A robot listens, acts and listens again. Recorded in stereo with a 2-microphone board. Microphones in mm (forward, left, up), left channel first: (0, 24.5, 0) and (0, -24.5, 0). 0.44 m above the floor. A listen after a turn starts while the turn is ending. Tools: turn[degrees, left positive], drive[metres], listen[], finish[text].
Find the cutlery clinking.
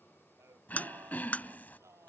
Thought: The cutlery clinking: about 30° left or 150° left.
Action: turn[30]
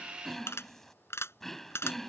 Thought: So it is at 120° left.
Action: turn[120]
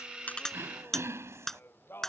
Action: finish[Facing the cutlery clinking.]